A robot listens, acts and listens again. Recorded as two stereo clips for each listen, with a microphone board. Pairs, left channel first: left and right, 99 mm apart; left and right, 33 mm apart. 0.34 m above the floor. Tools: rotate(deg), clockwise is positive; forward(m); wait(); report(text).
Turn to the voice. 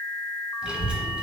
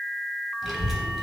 rotate(30)
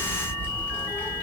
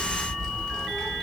rotate(-20)
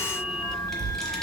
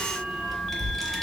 report("Found it: a child speaking, straight ahead.")